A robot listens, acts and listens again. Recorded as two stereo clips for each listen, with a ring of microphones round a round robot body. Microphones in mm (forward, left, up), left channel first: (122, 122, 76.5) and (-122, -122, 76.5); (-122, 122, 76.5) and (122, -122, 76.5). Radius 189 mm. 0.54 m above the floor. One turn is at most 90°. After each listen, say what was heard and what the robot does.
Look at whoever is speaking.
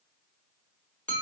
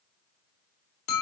Keep listening.
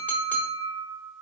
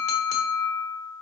Keep listening.
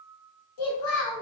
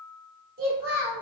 The child speaking: 20° left. Turn 20° left.
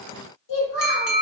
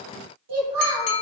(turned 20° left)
Found it: a child speaking, straight ahead.